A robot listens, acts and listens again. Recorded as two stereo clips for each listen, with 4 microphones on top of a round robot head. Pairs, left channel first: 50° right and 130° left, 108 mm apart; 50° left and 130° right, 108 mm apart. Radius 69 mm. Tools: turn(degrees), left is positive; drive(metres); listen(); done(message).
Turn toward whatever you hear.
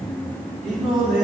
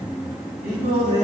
turn(degrees=-140)
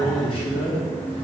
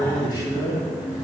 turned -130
turn(degrees=-10)
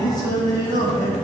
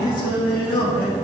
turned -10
done("Facing the singing.")